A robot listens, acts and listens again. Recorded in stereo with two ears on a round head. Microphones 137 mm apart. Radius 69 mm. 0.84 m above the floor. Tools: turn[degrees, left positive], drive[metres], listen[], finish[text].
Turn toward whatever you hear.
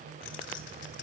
Action: turn[90]
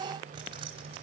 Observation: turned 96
Action: listen[]
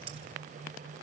Thought: The keys jangling is now 40° right.
Action: turn[-40]
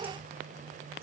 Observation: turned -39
Action: listen[]
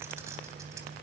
Thought: The keys jangling is now 20° right.
Action: turn[-20]
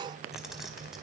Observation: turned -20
Action: finish[Found it: keys jangling, straight ahead, 2 to 4 m away.]